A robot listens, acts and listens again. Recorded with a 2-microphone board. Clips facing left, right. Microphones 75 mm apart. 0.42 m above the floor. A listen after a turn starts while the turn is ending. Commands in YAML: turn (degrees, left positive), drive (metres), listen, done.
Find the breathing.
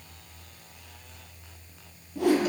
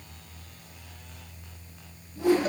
listen: true
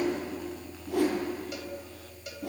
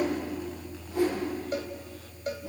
listen: true
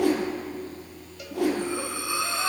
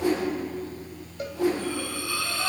turn: 20
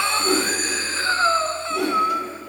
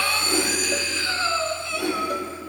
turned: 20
turn: 140
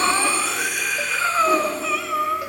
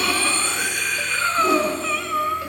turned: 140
done: "Facing the breathing."